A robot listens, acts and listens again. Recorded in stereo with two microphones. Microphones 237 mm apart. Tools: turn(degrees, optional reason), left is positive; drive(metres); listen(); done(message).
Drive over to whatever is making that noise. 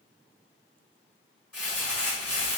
turn(degrees=30)
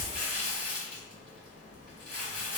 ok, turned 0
turn(degrees=30)
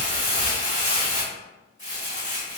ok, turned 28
turn(degrees=145, reason="So it is at 145° left.")
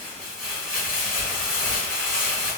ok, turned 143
drive(metres=1.0)
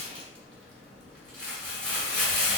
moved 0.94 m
drive(metres=1.0)
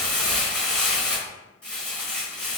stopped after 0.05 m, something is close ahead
done("Arrived at the crumpling, straight ahead.")